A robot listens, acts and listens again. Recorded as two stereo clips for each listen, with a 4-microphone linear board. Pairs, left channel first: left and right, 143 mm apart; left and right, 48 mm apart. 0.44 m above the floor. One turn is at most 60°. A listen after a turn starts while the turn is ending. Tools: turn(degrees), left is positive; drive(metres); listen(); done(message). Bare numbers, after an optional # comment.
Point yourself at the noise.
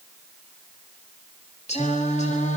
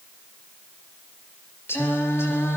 # The singing: about 55° left or 125° left.
turn(55)
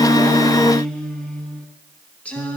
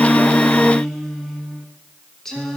# So it is at 10° left.
turn(10)
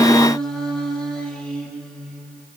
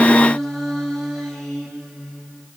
done("Facing the singing.")